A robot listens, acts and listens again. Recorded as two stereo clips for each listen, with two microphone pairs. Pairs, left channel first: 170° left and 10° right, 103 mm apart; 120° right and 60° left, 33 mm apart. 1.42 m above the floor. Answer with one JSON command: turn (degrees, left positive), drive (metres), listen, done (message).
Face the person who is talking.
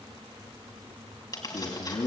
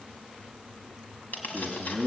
{"turn": 155}
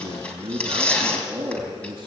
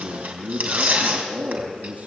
{"turn": 25}
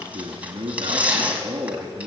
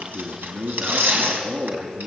{"done": "Facing the man speaking, 2 to 4 m away."}